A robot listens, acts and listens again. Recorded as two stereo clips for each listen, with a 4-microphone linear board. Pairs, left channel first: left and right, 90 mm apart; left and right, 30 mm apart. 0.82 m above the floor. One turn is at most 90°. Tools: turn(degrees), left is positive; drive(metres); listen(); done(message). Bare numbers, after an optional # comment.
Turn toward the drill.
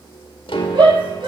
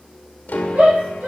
listen()
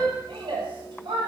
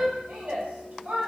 listen()
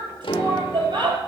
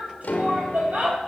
done("I can't make out a drill, only a shout and a piano.")